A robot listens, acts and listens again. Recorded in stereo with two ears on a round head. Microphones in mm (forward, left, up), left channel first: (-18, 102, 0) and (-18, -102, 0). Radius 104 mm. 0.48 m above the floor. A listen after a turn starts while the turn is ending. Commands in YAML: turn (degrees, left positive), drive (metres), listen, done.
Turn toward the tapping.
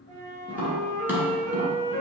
turn: -30
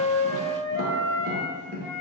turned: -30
turn: -140
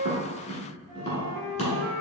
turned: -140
turn: 30
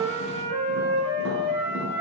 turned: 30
listen: true
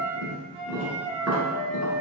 turn: -10
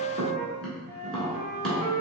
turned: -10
done: "Facing the tapping."